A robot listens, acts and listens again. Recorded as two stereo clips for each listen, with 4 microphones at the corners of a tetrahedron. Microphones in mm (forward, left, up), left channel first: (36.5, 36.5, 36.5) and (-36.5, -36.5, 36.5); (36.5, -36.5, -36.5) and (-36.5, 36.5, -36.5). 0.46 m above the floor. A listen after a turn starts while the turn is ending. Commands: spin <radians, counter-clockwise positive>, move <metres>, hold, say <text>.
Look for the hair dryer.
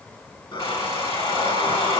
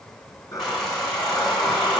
spin 0.79
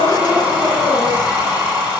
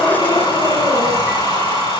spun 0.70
say Facing the hair dryer.